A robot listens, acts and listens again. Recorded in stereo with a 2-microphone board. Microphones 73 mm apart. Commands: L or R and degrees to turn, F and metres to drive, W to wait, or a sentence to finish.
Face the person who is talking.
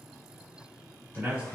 R20
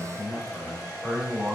Facing the man speaking, 1 to 2 m away.